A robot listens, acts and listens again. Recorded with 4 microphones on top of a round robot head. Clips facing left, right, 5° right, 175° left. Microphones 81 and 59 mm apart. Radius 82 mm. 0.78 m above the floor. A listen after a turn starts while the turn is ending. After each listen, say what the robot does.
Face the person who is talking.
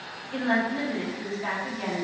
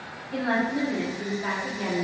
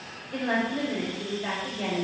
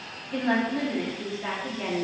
Turn 160° right.
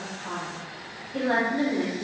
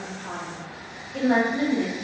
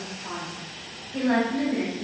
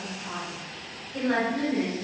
Turn 45° left.
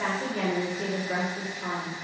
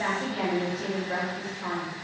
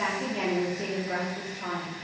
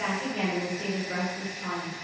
Found it: a woman speaking, straight ahead.